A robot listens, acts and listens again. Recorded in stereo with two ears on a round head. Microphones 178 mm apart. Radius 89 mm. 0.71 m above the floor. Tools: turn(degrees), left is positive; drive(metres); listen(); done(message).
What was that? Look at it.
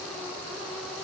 listen()
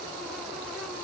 listen()
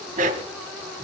turn(degrees=-40)
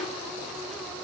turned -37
listen()
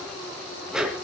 done("Facing the dog barking, 2 to 4 m away.")